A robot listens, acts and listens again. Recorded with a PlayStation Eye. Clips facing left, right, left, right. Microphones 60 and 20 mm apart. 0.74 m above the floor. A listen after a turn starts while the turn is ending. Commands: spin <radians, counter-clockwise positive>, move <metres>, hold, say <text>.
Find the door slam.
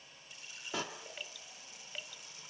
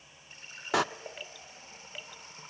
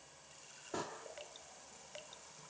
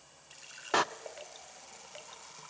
spin -1.57
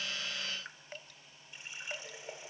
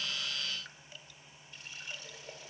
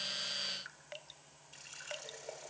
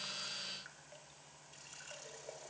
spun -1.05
spin -0.52
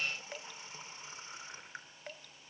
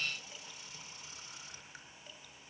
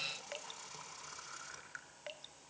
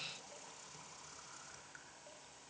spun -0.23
spin -0.26
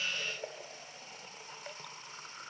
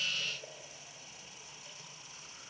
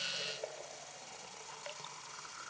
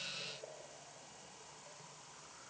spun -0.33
say I heard a door slam from this way, but can't make it out now.